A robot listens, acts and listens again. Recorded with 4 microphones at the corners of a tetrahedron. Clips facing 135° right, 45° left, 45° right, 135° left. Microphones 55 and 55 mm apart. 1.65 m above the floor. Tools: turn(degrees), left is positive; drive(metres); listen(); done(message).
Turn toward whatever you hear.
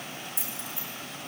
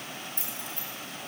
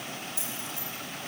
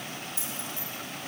turn(degrees=80)
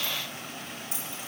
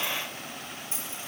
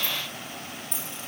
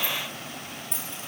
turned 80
turn(degrees=-15)
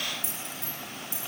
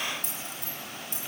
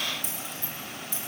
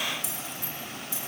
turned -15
done("Facing the keys jangling.")